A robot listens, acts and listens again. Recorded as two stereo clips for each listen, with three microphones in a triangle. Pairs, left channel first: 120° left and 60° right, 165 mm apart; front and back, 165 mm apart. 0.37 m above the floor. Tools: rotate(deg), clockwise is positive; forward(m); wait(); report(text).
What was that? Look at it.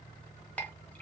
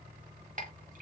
rotate(160)
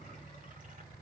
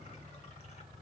wait()
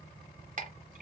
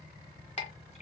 rotate(35)
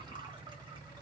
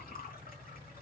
report("Found it: a clink, straight ahead.")